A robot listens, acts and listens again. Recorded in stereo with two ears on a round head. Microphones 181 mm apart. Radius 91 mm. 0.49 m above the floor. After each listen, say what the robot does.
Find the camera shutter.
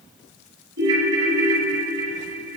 Keep listening.
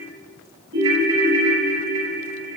Keep listening.
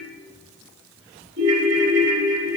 I can't make out a camera shutter to turn to.